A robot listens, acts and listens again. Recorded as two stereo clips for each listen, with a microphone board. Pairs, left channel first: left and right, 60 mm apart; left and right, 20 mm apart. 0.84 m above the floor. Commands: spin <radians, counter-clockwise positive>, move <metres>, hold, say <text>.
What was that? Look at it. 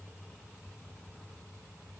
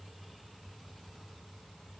hold
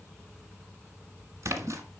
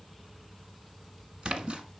spin -1.05
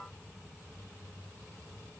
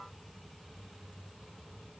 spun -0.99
hold
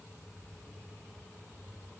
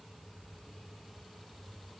say I heard a splash, but can't make it out now. It was about straight ahead or 65° right.